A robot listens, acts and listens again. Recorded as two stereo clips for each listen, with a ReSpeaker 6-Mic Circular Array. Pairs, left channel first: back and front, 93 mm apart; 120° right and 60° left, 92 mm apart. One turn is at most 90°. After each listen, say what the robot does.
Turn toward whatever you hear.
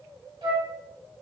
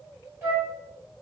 Found it: a flute, straight ahead, 2 to 4 m away.